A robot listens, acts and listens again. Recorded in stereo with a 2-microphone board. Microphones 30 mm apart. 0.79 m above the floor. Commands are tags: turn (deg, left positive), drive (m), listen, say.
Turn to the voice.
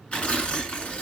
<listen/>
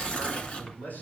<turn deg="90"/>
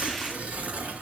<listen/>
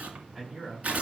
<turn deg="-10"/>
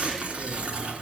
<listen/>
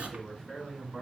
<say>Found it: a man speaking, straight ahead.</say>